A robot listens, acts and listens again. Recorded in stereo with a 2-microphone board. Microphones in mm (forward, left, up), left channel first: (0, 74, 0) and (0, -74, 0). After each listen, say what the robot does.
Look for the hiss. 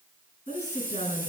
Turn 30° right.
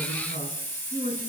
Turn 15° left.
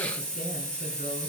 Found it: a hiss, straight ahead.